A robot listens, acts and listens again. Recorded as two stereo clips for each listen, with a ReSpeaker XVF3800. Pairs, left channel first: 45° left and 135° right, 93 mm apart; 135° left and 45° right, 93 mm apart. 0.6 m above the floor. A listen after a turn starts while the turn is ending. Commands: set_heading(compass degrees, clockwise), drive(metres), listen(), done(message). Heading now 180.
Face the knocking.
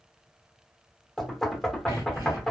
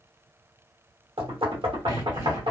set_heading(220)
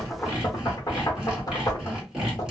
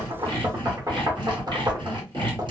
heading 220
done("Found it: knocking, straight ahead.")